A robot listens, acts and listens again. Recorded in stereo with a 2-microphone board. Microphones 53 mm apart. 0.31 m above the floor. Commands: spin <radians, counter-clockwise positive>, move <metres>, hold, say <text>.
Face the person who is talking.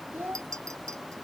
spin -0.70
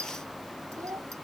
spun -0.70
spin -1.75
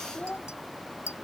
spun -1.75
spin 0.35
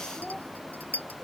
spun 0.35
say Found it: a child speaking, straight ahead.